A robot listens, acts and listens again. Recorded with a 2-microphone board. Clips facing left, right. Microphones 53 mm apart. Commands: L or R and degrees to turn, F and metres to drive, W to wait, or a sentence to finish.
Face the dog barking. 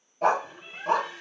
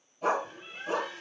L70
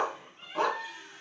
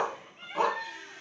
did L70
Found it: a dog barking, straight ahead, 2 to 4 m away.